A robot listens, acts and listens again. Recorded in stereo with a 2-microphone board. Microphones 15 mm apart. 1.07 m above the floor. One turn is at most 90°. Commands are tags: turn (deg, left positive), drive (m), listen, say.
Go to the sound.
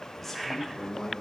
<turn deg="30"/>
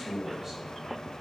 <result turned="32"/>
<turn deg="-20"/>
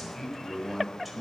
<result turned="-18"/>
<drive m="1.0"/>
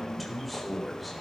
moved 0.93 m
<drive m="1.0"/>
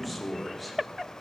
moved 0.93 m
<drive m="1.0"/>
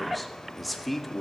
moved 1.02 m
<drive m="1.0"/>
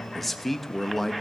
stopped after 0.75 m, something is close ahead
<turn deg="10"/>
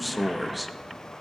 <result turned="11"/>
<say>I am next to the man speaking.</say>